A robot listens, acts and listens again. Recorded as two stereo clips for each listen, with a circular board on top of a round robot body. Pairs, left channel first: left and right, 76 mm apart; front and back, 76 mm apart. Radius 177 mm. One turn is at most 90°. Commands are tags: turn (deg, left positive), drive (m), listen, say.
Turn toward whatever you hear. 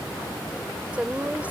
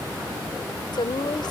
<turn deg="-15"/>
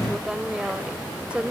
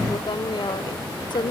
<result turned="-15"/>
<turn deg="-15"/>
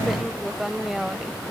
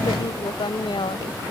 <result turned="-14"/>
<say>Found it: a woman speaking, straight ahead.</say>